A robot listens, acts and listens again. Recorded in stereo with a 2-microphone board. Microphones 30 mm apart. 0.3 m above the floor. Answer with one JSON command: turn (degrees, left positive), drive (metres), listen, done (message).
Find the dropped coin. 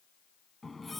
{"listen": true}
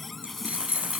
{"turn": -45}
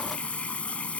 {"listen": true}
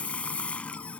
{"done": "I heard a dropped coin, but can't make it out now. It was about straight ahead or 90° right."}